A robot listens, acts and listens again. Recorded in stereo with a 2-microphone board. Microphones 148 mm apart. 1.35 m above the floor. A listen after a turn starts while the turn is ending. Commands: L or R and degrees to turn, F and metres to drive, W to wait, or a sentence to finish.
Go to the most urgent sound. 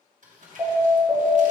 R15
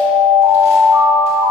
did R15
R150
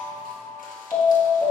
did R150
L10
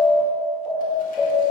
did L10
F1.0
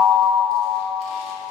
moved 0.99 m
F1.0
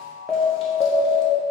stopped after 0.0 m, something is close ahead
I am next to the alarm.